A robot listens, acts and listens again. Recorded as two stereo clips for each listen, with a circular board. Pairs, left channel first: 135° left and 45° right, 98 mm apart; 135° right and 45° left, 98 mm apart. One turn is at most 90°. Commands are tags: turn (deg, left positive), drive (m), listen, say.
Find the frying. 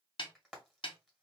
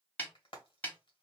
<turn deg="-90"/>
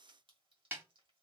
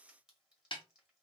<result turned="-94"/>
<turn deg="-40"/>
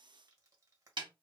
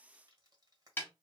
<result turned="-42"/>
<listen/>
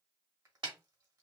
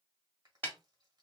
<say>Facing where the frying came from. I can't hear it now.</say>